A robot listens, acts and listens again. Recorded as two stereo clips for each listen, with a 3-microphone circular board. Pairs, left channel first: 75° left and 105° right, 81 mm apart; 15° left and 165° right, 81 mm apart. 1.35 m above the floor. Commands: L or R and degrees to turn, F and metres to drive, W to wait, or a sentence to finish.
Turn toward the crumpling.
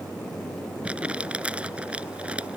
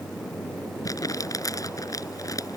R30
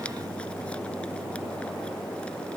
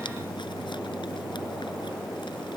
W
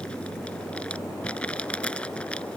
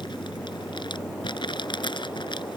Found it: crumpling, straight ahead.